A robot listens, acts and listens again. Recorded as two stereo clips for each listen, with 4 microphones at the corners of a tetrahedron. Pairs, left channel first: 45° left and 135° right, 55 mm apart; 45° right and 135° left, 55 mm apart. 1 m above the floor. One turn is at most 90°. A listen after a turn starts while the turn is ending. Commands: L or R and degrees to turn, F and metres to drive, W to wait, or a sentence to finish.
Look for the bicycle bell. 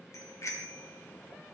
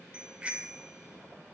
L70
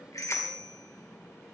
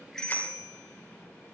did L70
L15
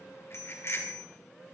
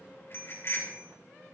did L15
Facing the bicycle bell, 2 to 4 m away.